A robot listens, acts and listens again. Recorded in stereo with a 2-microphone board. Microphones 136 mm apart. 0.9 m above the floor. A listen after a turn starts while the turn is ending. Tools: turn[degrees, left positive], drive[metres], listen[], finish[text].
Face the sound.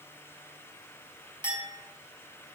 Thought: The clink: about 35° right or 145° right.
Action: turn[-35]
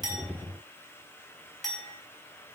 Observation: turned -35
Action: finish[Facing the clink, over 4 m away.]